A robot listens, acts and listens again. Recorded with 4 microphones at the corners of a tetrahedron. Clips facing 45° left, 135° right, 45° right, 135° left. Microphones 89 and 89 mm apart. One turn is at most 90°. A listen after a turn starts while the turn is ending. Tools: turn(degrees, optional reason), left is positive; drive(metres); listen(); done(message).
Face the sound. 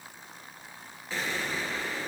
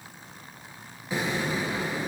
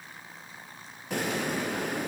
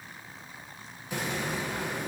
turn(degrees=-65, reason="The explosion: 65° right.")
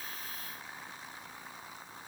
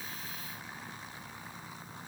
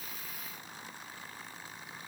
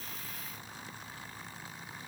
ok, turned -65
done("I heard an explosion from this way, but can't make it out now.")